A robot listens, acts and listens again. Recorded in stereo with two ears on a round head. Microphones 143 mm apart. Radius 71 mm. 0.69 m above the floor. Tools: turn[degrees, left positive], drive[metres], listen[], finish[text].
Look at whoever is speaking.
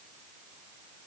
Action: listen[]
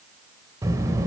Thought: The child speaking: about 20° right or 160° right.
Action: turn[-20]
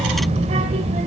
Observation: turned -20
Thought: So it is at 140° right.
Action: turn[-140]
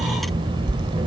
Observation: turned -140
Thought: The child speaking is now 30° right.
Action: turn[-30]
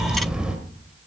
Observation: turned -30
Action: finish[Facing the child speaking, 1 to 2 m away.]